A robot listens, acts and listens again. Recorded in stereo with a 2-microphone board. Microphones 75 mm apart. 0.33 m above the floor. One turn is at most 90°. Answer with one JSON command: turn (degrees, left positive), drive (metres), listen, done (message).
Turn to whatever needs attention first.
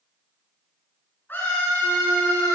{"turn": 30}
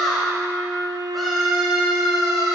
{"done": "Facing the scream."}